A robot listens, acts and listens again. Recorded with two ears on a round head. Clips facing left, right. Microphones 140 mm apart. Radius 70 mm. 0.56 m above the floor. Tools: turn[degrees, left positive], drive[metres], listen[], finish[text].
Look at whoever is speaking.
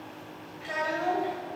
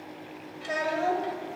Thought: The child speaking: about 55° right or 125° right.
Action: turn[-55]
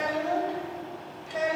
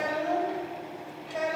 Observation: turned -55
Action: finish[Found it: a child speaking, straight ahead.]